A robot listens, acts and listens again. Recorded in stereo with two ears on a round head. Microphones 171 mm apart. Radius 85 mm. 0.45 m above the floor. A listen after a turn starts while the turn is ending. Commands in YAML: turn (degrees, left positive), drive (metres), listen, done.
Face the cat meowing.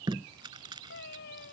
turn: 60
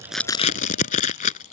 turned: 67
listen: true
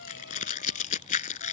listen: true
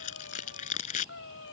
turn: 65
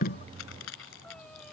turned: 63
listen: true
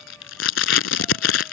listen: true
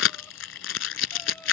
done: "Facing where the cat meowing came from. I can't hear it now."